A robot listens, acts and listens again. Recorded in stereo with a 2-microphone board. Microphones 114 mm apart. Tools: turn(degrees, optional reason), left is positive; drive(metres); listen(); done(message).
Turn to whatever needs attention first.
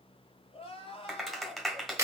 turn(degrees=50, reason="The crying: about 50° left or 130° left.")
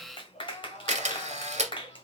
turn(degrees=80, reason="So it is at 80° left.")
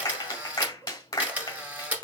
listen()
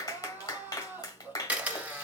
turn(degrees=-15, reason="The crying is now 15° right.")
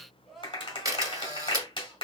done("Found it: crying, straight ahead.")